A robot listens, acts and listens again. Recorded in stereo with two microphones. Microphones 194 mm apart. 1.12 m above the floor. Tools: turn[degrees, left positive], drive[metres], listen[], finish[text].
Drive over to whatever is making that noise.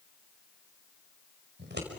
Thought: The scissors: about 65° right or 115° right.
Action: turn[-65]
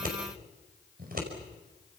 Thought: So it is at 50° right.
Action: turn[-50]
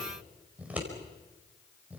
Action: drive[1.0]
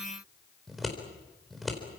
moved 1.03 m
Action: drive[1.0]
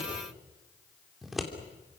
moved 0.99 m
Action: drive[1.0]
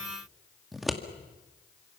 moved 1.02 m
Action: drive[1.0]
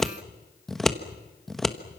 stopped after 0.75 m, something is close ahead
Action: finish[Arrived at the scissors, straight ahead.]